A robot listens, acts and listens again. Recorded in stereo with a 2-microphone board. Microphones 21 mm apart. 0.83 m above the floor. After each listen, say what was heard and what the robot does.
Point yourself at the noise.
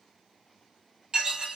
The dishes clattering: about 40° right or 140° right. Turn 40° right.
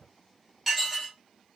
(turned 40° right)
Facing the dishes clattering.